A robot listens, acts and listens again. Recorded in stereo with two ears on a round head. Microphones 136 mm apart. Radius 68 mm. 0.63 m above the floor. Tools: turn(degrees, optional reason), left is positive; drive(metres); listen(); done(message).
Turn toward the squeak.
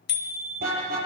listen()
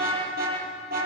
listen()
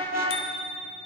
done("I can't make out a squeak to turn to.")